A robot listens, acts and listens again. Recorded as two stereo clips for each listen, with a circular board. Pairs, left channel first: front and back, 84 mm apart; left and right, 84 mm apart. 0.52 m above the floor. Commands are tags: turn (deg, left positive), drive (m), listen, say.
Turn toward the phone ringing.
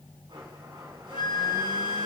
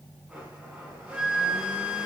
<listen/>
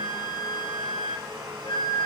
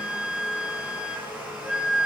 <listen/>
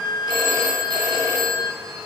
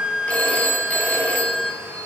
<turn deg="160"/>
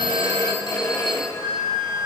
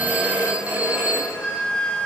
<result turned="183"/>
<turn deg="-20"/>
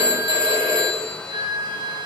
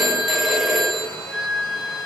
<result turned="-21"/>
<say>Found it: a phone ringing, straight ahead, 2 to 4 m away.</say>